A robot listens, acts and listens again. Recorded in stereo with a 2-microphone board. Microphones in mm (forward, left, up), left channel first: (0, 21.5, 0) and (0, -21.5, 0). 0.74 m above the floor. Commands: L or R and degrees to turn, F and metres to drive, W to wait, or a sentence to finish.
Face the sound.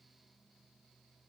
W
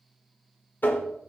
L45
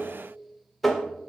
Found it: tapping, straight ahead.